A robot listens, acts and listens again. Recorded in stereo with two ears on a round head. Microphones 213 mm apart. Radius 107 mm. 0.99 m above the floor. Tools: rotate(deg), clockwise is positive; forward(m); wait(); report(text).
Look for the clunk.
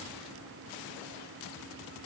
wait()
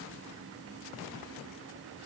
wait()
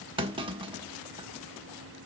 rotate(20)
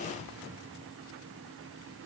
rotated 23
wait()
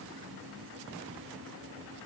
report("I heard a clunk, but can't make it out now. It was about straight ahead or 135° right.")